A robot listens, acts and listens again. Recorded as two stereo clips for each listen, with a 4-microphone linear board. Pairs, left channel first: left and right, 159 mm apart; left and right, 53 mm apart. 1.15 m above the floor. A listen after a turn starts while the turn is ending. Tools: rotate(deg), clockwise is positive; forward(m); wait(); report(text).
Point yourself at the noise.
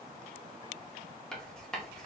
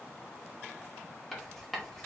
rotate(-30)
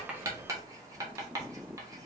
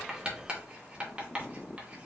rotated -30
rotate(25)
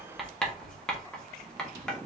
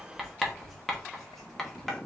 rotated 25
report("Found it: writing, straight ahead.")